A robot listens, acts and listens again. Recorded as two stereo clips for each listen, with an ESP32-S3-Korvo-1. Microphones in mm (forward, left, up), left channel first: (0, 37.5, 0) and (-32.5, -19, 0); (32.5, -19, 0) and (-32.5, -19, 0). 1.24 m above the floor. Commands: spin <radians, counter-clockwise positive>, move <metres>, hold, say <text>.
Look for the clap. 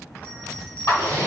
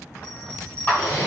spin 0.87
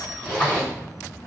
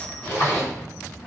hold
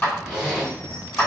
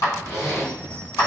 say Facing the clap, 1 to 2 m away.